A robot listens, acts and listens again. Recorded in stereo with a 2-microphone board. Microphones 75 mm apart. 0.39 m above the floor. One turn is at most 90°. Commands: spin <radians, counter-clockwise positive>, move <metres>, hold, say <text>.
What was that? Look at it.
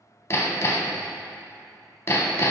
spin 0.70
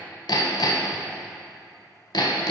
spin 1.57
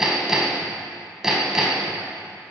say Found it: hammering, straight ahead, under 1 m away.